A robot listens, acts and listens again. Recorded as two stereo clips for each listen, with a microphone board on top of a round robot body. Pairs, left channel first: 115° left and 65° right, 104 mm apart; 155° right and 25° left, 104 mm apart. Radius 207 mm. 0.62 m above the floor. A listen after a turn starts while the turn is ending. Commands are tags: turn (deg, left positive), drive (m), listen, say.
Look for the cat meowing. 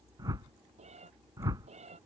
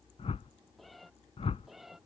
<turn deg="-65"/>
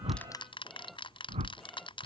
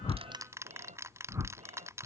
<turn deg="25"/>
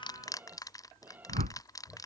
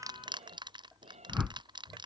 <say>Found it: a cat meowing, straight ahead.</say>